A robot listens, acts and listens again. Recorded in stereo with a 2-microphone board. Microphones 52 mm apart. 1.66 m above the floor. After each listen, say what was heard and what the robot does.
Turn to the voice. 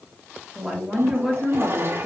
Turn 30° left.
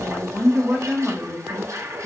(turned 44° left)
So it is at 15° right. Turn 15° right.
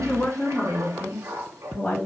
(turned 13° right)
The woman speaking is now 25° left. Turn 25° left.
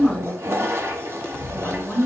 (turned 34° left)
Facing the woman speaking, 2 to 4 m away.